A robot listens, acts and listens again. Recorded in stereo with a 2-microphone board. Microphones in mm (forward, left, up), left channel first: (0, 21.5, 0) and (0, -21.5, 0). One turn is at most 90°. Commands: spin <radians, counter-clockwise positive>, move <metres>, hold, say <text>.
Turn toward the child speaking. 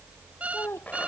spin 1.05
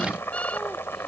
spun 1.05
hold
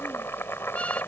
hold
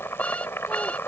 say I heard a child speaking, but can't make it out now. It was about straight ahead or 60° left.